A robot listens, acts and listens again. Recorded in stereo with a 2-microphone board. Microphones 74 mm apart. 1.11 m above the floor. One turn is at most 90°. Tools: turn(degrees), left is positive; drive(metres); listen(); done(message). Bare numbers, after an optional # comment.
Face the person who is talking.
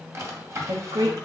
# The woman speaking: about 75° right or 105° right.
turn(-75)
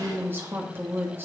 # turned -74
# So it is at 30° right.
turn(-30)
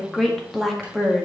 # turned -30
done("Facing the woman speaking, 1 to 2 m away.")